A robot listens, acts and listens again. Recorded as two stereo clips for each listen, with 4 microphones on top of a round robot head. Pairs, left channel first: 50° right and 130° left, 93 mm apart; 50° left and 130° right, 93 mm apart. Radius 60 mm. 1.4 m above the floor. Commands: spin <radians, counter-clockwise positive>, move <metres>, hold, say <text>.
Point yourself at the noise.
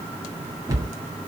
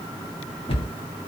spin 1.31
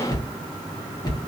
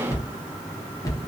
say Facing the cupboard door, 1 to 2 m away.